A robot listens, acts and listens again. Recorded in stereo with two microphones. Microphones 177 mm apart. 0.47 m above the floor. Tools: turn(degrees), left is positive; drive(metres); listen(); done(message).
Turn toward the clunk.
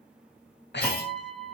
turn(degrees=55)
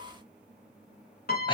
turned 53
listen()
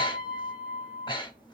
done("I heard a clunk, but can't make it out now. It was about 5° left or 70° left.")